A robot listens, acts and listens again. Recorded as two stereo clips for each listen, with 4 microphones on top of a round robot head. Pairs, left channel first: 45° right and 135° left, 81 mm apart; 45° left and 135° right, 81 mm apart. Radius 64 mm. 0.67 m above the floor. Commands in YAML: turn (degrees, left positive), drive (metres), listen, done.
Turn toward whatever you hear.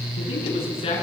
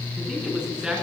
turn: -55
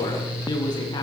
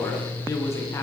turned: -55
turn: -10
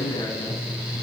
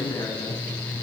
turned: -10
done: "Found it: a man speaking, straight ahead."